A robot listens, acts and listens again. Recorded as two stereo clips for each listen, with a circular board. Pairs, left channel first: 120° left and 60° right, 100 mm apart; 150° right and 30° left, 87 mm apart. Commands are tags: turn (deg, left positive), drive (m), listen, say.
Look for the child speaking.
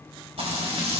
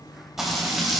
<listen/>
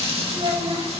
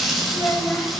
<turn deg="-80"/>
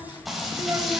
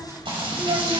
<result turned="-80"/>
<listen/>
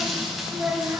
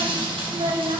<turn deg="20"/>
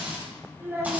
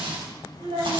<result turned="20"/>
<turn deg="10"/>
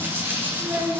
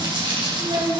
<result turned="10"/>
<say>Found it: a child speaking, straight ahead, 2 to 4 m away.</say>